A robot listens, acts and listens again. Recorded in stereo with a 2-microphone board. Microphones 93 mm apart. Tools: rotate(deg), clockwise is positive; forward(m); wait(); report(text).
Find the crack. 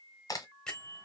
rotate(-40)
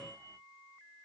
wait()
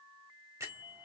report("I heard a crack, but can't make it out now. It was about straight ahead or 100° left.")